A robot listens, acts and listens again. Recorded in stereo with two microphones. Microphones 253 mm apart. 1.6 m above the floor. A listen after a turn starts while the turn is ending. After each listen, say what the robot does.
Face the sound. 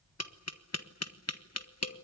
Turn 70° left.
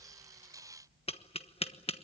Turn 20° left.
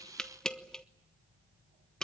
Facing the tapping.